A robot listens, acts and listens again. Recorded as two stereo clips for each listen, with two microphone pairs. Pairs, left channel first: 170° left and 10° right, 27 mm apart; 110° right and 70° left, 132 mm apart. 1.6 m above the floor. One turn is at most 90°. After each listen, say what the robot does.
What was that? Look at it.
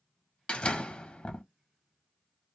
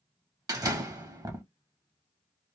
Turn 90° left.
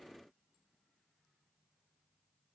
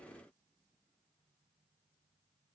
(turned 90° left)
Turn 40° left.
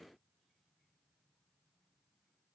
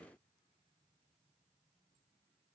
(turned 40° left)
I heard a door slam from this way, but can't make it out now.